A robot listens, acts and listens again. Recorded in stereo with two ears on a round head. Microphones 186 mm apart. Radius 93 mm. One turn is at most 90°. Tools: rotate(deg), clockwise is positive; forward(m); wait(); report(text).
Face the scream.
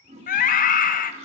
rotate(-40)
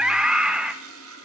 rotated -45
report("Facing the scream, 1 to 2 m away.")